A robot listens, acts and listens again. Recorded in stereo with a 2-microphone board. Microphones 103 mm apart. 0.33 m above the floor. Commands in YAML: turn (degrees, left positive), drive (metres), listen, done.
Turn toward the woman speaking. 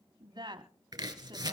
turn: -45
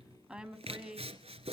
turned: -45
turn: -10
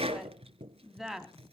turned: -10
done: "Found it: a woman speaking, straight ahead, 2 to 4 m away."